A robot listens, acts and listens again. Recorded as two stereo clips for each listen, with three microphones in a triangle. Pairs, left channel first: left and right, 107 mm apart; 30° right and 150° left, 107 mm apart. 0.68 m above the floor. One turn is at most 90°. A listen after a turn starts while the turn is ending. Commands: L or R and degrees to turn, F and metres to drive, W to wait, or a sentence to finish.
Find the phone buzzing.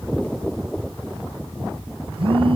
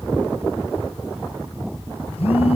R55
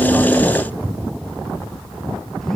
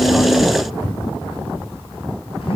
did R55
Found it: a phone buzzing, straight ahead.